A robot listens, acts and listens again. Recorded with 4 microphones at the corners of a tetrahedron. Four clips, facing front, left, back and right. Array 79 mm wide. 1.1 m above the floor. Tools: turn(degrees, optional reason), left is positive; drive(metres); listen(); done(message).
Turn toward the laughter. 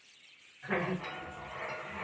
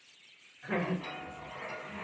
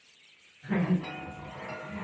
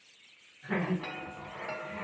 turn(degrees=30, reason="The laughter: 30° left.")
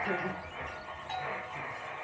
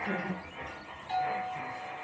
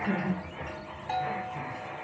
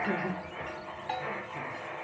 turn(degrees=-30, reason="The laughter is now 30° right.")
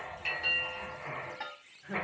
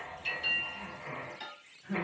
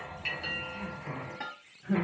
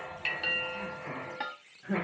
turn(degrees=-80, reason="The laughter is now 80° right.")
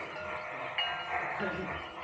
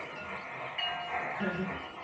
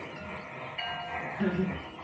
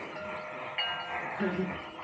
turn(degrees=-40, reason="The laughter is now 40° right.")
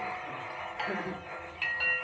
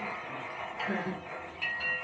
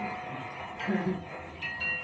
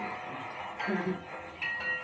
turn(degrees=-15, reason="The laughter is now 15° right.")
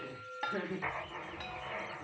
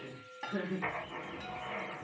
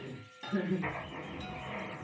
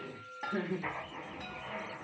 done("Found it: laughter, straight ahead, 1 to 2 m away.")